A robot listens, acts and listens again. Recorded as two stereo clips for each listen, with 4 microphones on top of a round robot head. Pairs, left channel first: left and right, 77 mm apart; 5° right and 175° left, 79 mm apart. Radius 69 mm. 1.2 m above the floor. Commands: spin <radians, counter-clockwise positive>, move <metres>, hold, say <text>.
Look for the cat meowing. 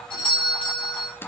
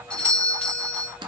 hold
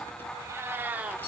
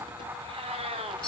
spin -2.71
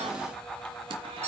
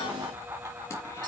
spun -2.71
hold
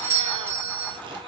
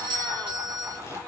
hold
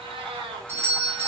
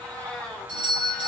spin -1.57
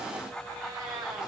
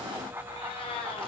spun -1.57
spin -0.61
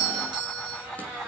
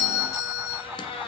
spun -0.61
spin -0.17
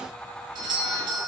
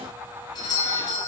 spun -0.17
hold
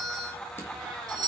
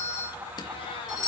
hold
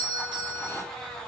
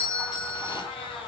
say Facing where the cat meowing came from. I can't hear it now.